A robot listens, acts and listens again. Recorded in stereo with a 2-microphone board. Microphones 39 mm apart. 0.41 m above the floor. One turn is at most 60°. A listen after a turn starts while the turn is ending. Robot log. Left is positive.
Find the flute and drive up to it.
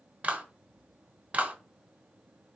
cmd idle
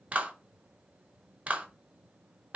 cmd idle
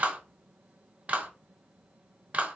end: I can't make out a flute, only a clap.